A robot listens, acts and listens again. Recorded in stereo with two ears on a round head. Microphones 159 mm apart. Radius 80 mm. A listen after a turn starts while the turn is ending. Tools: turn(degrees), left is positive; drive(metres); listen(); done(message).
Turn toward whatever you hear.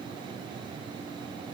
listen()
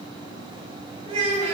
turn(degrees=-40)
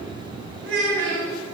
turn(degrees=-100)
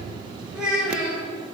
done("Found it: a child speaking, straight ahead, over 4 m away.")